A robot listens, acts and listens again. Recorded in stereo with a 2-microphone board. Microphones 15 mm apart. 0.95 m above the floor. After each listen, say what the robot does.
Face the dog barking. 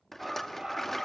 Turn 45° right.
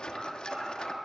Turn 95° right.
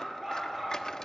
Turn 20° right.
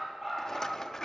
Turn 10° right.
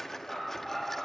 Facing the dog barking.